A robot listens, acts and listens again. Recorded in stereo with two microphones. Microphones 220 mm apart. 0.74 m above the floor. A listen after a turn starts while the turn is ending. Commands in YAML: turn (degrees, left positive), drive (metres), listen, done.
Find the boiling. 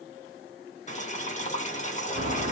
turn: 30
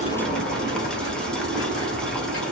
listen: true
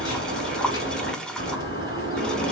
done: "Facing the boiling."